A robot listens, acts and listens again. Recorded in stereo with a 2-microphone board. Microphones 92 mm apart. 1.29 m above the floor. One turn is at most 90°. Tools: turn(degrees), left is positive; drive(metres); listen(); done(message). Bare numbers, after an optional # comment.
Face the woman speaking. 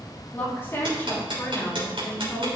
# The woman speaking: about 30° left or 150° left.
turn(30)
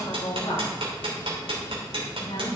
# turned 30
# So it is at 105° left.
turn(90)
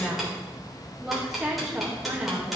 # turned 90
# The woman speaking is now 10° right.
turn(-10)
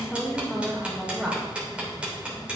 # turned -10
done("Found it: a woman speaking, straight ahead.")